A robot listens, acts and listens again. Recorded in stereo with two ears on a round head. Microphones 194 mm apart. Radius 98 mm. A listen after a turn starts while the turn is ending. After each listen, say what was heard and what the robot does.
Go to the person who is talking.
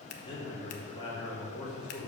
The man speaking: about 20° left or 160° left. Turn 20° left.
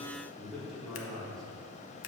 Drive 1.0 m forward.
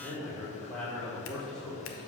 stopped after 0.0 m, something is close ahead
Blocked. The man speaking is further on, straight ahead.